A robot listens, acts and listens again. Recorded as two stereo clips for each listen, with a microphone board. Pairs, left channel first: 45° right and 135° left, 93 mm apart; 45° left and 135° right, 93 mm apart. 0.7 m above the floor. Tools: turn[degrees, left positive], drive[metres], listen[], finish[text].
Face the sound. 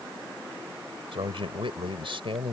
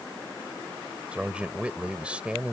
Thought: The man speaking: 150° left.
Action: turn[150]
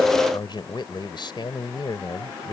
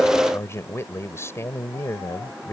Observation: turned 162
Thought: The man speaking is now 15° right.
Action: turn[-15]
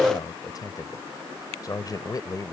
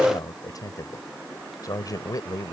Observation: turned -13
Action: finish[Found it: a man speaking, straight ahead.]